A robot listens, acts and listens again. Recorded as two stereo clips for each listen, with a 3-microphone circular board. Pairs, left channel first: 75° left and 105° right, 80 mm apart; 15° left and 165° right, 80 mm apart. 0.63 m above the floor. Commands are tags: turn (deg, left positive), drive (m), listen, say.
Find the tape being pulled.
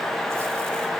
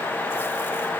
<listen/>
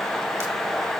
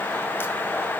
<listen/>
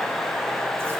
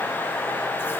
<say>I can't make out tape being pulled to turn to.</say>